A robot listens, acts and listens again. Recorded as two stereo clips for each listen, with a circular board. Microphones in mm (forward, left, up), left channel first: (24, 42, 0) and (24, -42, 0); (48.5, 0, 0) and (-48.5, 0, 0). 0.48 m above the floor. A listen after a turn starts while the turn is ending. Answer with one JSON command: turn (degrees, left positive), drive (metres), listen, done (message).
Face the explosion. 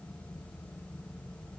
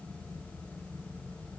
{"listen": true}
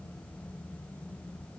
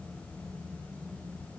{"listen": true}
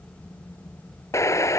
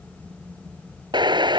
{"turn": 140}
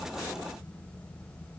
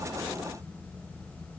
{"done": "Facing where the explosion came from. I can't hear it now."}